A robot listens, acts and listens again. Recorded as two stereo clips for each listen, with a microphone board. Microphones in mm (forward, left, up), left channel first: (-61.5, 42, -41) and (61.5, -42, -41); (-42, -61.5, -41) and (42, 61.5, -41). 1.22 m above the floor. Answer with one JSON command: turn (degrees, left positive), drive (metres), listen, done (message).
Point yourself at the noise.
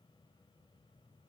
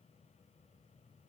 {"listen": true}
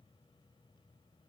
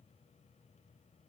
{"listen": true}
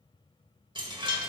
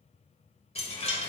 {"turn": -85}
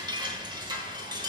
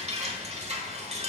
{"turn": 20}
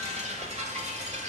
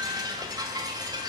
{"done": "Facing the chime."}